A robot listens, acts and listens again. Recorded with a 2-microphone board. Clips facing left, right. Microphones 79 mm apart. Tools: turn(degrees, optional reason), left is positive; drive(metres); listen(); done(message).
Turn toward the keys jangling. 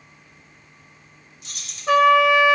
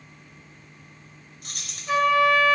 turn(degrees=-50, reason="The keys jangling: about 50° right or 130° right.")
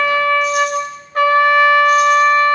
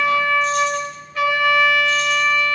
listen()
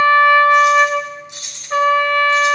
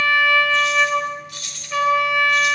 turn(degrees=25, reason="So it is at 25° left.")
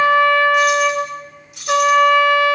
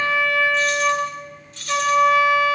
turn(degrees=15, reason="The keys jangling is now 15° left.")
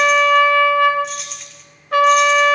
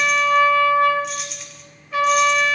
done("Facing the keys jangling, 2 to 4 m away.")